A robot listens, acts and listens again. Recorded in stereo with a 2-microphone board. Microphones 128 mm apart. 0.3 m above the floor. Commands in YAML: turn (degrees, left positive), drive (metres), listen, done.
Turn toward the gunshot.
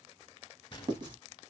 turn: 40
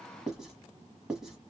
listen: true
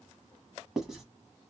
done: "I heard a gunshot, but can't make it out now. It was about straight ahead or 100° left."